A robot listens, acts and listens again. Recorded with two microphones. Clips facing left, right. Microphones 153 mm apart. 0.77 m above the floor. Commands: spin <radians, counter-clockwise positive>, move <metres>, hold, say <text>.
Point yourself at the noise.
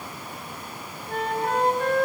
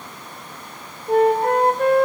spin -0.96
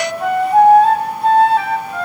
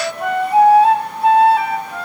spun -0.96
say Found it: a flute, straight ahead, 2 to 4 m away.